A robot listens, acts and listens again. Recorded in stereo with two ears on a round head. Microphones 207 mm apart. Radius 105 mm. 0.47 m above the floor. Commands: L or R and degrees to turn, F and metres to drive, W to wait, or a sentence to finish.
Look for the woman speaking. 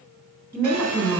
R30
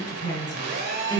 L20
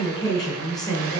Facing the woman speaking.